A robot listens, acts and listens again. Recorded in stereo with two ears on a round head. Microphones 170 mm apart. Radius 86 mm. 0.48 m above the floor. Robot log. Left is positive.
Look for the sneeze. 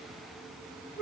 cmd idle
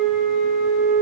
cmd idle
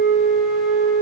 end: I can't make out a sneeze to turn to.